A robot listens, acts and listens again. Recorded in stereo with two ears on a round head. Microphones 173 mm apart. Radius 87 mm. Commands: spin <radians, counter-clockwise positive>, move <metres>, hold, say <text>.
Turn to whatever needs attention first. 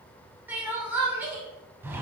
spin -0.52
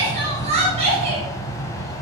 spin -2.53
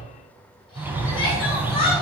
spin 0.52
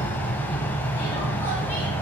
hold
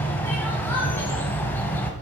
hold
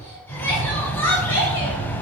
spin 0.17
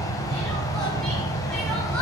hold
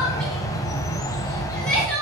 say Found it: crying, straight ahead, 2 to 4 m away.